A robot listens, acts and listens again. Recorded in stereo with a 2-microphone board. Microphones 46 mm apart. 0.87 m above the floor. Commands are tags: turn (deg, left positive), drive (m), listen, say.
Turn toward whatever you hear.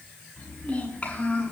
<turn deg="30"/>
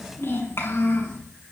<turn deg="115"/>
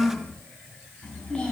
<turn deg="15"/>
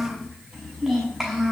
<turn deg="-10"/>
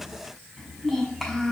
<say>Facing the child speaking.</say>